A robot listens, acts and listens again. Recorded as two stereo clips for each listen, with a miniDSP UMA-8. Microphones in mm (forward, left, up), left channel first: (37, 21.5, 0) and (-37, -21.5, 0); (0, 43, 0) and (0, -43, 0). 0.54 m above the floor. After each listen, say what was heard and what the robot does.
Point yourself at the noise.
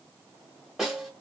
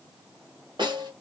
The snare drum: 70° right. Turn 70° right.
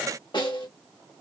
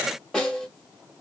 Found it: a snare drum, straight ahead.